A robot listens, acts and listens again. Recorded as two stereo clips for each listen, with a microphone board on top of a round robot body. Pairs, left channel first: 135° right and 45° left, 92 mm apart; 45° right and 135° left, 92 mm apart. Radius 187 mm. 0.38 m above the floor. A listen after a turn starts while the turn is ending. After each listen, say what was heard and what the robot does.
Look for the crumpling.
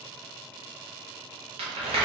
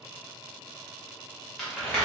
The crumpling: 45° left. Turn 45° left.
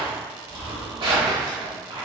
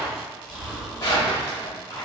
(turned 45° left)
Found it: crumpling, straight ahead.